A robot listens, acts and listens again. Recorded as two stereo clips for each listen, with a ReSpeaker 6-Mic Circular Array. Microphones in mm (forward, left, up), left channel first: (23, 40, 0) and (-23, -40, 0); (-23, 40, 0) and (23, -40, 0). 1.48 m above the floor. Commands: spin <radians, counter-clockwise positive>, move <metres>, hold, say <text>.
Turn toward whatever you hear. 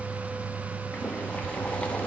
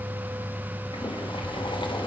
spin 2.36
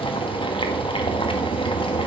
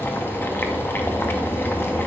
spin 0.96
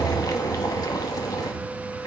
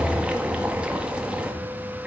spin 0.35
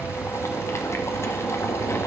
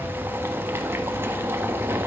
say Facing the boiling.